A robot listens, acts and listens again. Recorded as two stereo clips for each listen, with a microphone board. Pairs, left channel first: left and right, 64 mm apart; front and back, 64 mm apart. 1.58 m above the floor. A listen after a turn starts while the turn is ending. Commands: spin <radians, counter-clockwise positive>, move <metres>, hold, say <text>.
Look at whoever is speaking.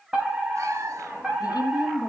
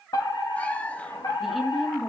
spin 1.57
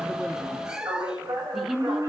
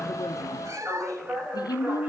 say Found it: a woman speaking, straight ahead.